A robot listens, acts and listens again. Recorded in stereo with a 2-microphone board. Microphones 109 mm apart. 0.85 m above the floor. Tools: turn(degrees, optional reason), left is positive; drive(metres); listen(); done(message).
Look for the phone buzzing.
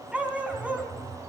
turn(degrees=-30)
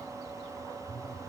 turn(degrees=-145, reason="So it is at 145° right.")
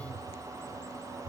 turn(degrees=35, reason="The phone buzzing is now 35° left.")
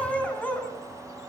listen()
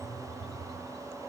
done("Facing the phone buzzing, over 4 m away.")